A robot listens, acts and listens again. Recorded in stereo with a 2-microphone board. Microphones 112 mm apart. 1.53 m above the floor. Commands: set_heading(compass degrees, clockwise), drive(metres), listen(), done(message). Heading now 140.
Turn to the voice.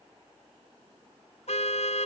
listen()
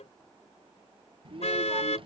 set_heading(190)
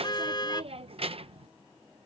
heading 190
set_heading(260)
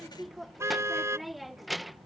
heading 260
done("Facing the child speaking.")